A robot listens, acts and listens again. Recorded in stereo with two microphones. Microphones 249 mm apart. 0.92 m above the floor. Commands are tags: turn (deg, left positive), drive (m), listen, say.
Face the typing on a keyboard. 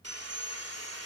<listen/>
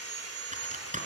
<turn deg="-30"/>
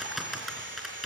<say>Facing the typing on a keyboard, over 4 m away.</say>